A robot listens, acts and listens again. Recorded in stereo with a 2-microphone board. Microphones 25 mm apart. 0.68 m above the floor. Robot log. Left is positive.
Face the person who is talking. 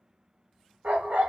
cmd idle
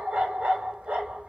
cmd idle
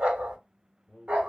cmd yaw +30
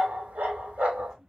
note: So it is at 20° right.
cmd yaw -20
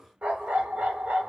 cmd idle
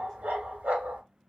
cmd idle
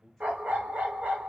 end: Facing the man speaking.